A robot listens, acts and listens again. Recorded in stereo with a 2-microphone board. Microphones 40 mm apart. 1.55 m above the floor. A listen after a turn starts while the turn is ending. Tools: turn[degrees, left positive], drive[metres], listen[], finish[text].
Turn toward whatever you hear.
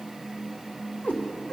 Thought: The cat meowing: about 40° left or 140° left.
Action: turn[40]
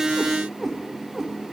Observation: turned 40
Action: finish[Found it: a cat meowing, straight ahead.]